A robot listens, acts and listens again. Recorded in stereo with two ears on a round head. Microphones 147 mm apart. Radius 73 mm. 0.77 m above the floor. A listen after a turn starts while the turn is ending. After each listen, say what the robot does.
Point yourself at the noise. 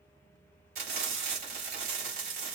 Turn 60° right.
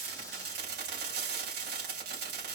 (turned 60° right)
Turn 60° right.
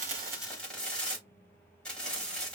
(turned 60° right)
Facing the frying.